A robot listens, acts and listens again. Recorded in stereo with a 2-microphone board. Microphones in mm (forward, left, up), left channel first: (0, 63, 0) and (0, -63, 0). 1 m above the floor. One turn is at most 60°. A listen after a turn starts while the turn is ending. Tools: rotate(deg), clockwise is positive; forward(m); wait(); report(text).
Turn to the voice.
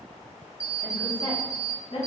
rotate(-45)
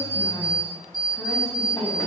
wait()
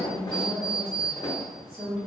rotate(10)
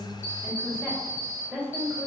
rotate(10)
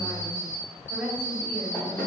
report("Facing the woman speaking.")